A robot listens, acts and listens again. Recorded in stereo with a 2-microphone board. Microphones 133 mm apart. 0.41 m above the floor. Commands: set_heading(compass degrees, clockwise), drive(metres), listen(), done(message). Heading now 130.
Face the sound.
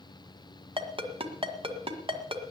set_heading(170)
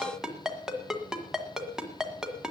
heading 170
done("Found it: a ringtone, straight ahead.")